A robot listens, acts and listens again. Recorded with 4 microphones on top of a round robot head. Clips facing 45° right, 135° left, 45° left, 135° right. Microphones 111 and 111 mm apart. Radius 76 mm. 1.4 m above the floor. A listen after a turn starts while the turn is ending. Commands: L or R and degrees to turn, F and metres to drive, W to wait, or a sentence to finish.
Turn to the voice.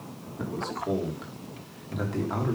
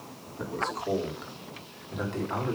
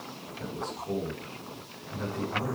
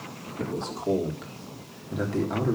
R135
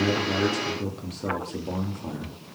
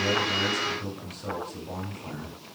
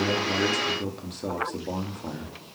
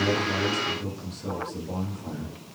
L20
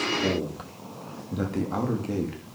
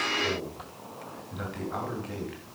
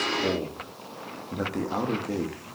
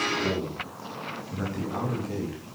Facing the man speaking, 2 to 4 m away.